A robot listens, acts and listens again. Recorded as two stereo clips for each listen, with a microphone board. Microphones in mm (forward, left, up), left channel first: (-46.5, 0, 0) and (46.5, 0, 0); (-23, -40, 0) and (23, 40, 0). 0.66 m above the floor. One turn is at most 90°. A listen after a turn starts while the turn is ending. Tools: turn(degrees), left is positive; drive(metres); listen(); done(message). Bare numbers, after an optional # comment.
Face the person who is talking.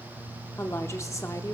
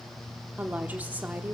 # The woman speaking: 130° left.
turn(90)
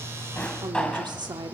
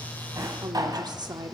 # The woman speaking is now 30° left.
turn(30)
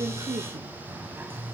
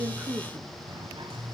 listen()
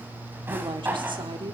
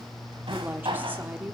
done("Found it: a woman speaking, straight ahead, 1 to 2 m away.")